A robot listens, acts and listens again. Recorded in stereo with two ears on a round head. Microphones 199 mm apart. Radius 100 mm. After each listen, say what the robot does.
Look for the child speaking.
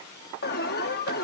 Keep listening.
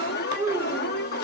Turn 30° right.
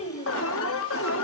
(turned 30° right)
Turn 35° left.
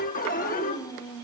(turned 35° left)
Turn 15° left.
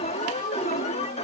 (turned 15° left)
Keep listening.
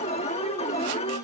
Keep listening.
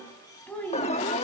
Found it: a child speaking, straight ahead, 2 to 4 m away.